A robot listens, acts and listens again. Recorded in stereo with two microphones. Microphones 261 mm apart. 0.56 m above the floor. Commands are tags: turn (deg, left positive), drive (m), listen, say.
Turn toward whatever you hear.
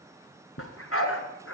<turn deg="55"/>
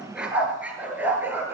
<turn deg="-10"/>
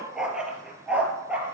<say>Facing the dog barking, 2 to 4 m away.</say>